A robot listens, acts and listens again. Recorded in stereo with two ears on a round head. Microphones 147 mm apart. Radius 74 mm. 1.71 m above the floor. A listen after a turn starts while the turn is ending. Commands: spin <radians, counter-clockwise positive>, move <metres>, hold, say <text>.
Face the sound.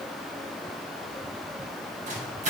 spin -0.79
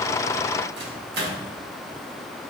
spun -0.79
spin -1.57
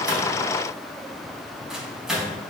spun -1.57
say Found it: a microwave, straight ahead.